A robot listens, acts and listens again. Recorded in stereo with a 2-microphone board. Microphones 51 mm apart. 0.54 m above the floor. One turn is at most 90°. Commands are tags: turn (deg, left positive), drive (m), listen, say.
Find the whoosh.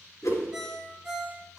<turn deg="70"/>
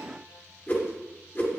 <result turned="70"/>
<turn deg="40"/>
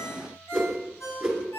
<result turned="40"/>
<say>Found it: a whoosh, straight ahead.</say>